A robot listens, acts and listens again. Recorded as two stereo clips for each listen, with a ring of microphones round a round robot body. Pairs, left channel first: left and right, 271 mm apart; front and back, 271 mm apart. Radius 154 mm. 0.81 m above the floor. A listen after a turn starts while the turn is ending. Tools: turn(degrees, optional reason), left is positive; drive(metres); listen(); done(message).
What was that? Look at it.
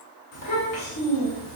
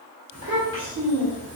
turn(degrees=140, reason="The child speaking: 140° left.")
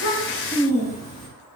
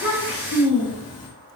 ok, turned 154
turn(degrees=15, reason="The child speaking is now 15° left.")
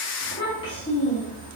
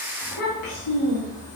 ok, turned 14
turn(degrees=25, reason="The child speaking is now 25° left.")
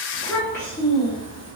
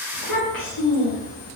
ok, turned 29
turn(degrees=15, reason="The child speaking is now 15° left.")
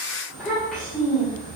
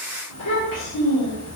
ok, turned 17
done("Facing the child speaking, 1 to 2 m away.")